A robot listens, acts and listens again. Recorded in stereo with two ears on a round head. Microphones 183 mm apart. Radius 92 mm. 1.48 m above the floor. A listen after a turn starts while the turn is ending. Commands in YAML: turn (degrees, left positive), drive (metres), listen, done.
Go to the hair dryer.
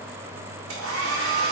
turn: -90
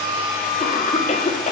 turn: 10
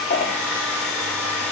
drive: 1.0
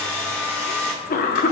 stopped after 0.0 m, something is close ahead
done: "Something is in my way. I am facing the hair dryer but have not reached it."